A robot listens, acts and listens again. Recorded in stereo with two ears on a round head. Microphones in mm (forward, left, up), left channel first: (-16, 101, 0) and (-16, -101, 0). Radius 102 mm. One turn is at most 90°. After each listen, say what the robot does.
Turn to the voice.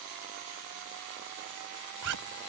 Keep listening.
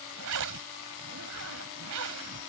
Keep listening.
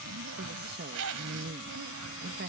Turn 50° right.
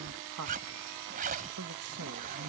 Turn 80° right.
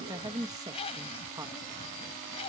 Turn 15° right.
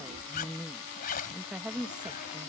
Facing the woman speaking.